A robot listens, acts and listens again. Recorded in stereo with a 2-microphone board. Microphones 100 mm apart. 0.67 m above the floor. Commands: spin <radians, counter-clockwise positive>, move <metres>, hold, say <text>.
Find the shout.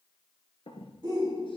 spin -0.70
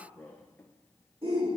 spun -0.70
spin -1.66
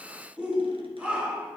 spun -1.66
spin -0.26
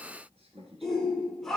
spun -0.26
say Found it: a shout, straight ahead, 1 to 2 m away.